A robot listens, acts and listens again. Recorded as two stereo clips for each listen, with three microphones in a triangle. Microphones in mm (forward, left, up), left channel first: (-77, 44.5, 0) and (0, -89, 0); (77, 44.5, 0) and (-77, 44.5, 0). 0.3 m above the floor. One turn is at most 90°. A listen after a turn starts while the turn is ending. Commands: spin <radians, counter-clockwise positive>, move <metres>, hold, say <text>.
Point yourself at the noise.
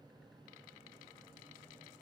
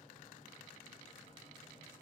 hold
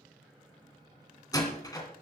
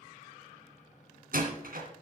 spin -1.57
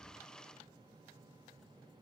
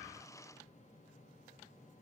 spin -1.48
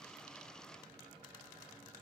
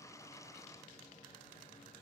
say Facing where the door slam came from. I can't hear it now.